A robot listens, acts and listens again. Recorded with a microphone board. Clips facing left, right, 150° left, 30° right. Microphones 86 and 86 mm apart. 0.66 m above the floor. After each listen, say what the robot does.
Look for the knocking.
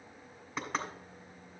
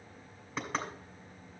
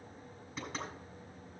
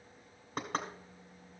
Found it: knocking, straight ahead.